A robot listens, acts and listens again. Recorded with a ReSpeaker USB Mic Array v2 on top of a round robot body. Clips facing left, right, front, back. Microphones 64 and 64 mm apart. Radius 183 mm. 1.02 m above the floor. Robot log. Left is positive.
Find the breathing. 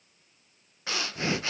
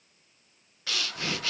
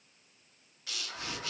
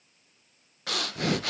note: The breathing: 155° left.
cmd yaw +155
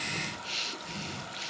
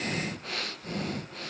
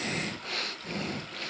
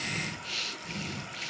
note: The breathing is now 45° right.
cmd yaw -45
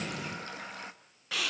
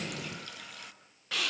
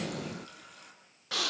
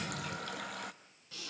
end: Found it: breathing, straight ahead.